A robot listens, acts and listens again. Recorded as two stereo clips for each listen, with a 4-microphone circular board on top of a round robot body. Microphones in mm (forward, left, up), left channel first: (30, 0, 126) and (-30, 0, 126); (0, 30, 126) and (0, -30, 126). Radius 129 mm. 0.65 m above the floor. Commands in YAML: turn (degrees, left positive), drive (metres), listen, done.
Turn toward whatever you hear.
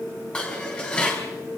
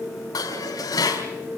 turn: 75
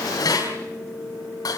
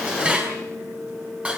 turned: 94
turn: -20
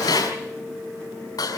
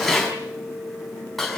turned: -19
done: "Facing the dishes clattering."